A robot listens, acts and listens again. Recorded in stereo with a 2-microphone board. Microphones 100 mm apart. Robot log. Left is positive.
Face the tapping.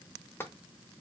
note: The tapping: about 20° left or 160° left.
cmd yaw +20
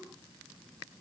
cmd idle
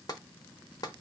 note: So it is at 135° left.
cmd yaw +135
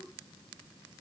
cmd idle
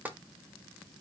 note: The tapping is now 20° right.
cmd yaw -20
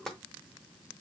end: Facing the tapping, under 1 m away.